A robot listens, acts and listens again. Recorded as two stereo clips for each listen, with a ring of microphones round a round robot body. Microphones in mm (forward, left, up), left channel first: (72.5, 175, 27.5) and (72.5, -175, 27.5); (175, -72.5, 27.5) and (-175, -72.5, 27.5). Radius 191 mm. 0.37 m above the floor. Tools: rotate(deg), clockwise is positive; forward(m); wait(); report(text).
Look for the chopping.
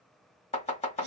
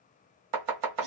rotate(-160)
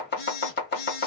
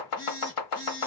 rotate(-30)
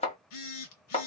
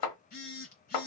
rotate(-15)
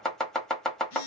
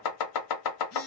report("Facing the chopping.")